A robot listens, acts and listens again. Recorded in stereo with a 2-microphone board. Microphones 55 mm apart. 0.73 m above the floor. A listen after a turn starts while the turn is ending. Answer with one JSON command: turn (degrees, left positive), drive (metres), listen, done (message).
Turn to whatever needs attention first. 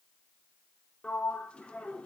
{"listen": true}
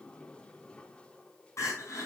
{"turn": 60}
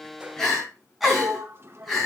{"done": "Facing the crying, over 4 m away."}